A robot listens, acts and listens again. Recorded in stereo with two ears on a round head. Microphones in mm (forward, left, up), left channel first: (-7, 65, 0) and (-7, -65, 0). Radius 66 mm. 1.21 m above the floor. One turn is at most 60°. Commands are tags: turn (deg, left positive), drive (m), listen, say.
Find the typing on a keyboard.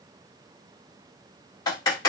<turn deg="25"/>
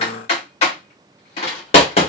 <turn deg="60"/>
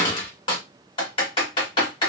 <turn deg="40"/>
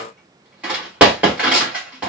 <turn deg="-10"/>
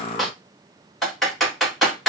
<say>Facing the typing on a keyboard, 1 to 2 m away.</say>